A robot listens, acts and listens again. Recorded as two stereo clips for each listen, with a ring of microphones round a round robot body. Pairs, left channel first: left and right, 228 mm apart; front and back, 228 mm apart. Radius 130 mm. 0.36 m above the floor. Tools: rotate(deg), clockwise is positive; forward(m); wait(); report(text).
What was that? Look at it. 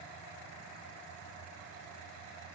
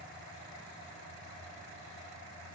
wait()
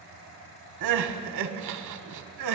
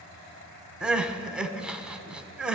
rotate(95)
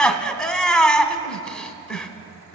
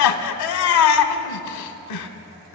report("Found it: crying, straight ahead, under 1 m away.")